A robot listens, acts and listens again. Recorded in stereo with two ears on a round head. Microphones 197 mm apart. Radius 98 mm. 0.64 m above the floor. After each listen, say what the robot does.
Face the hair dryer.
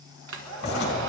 Turn 65° right.
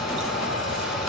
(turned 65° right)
Facing the hair dryer, 1 to 2 m away.